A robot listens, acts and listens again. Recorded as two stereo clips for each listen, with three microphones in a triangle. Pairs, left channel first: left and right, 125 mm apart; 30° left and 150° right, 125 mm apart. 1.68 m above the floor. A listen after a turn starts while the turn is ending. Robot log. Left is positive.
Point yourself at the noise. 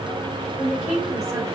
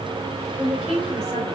note: The woman speaking: straight behind.
cmd yaw +180
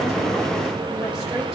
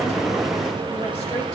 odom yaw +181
cmd idle
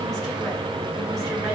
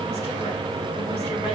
cmd idle
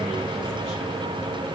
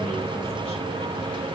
end: I heard a woman speaking from this way, but can't make it out now.